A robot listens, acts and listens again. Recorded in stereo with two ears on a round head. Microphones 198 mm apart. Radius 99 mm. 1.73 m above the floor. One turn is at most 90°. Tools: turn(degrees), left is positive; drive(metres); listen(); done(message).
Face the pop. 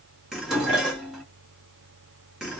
listen()
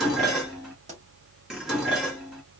turn(degrees=-30)
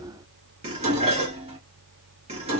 listen()
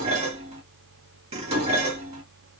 done("I heard a pop, but can't make it out now. It was about straight ahead or 120° right.")